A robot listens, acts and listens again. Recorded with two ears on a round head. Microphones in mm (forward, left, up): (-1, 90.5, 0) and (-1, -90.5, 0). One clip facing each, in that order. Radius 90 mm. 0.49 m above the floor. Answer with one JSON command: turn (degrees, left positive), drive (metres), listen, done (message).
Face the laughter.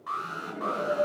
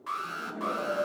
{"turn": 35}
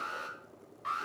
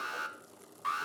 {"listen": true}
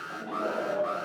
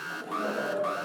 {"turn": -10}
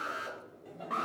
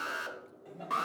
{"done": "Found it: laughter, straight ahead, 2 to 4 m away."}